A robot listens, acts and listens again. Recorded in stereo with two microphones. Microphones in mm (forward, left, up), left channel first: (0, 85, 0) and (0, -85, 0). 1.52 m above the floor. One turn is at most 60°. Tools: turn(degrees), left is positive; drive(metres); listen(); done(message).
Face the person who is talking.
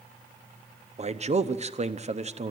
turn(degrees=-40)
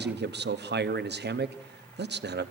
turn(degrees=-60)
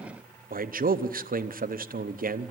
turn(degrees=-55)
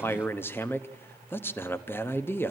turn(degrees=10)
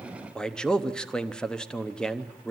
done("Facing the man speaking.")